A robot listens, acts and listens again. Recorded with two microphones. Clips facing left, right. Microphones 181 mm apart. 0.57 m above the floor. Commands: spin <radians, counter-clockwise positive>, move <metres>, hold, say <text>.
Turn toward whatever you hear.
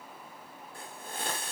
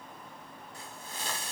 spin 0.96
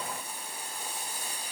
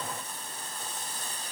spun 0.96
spin 0.26
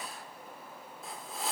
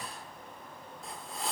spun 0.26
say Found it: a hiss, straight ahead.